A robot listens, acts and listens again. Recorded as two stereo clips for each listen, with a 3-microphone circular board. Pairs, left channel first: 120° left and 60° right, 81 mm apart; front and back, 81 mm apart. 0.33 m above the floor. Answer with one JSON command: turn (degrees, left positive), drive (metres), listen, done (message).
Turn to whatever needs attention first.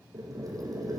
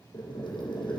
{"listen": true}
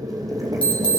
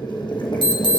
{"turn": -165}
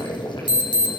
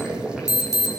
{"turn": -45}
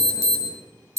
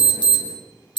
{"turn": -15}
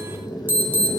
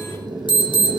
{"done": "Facing the alarm."}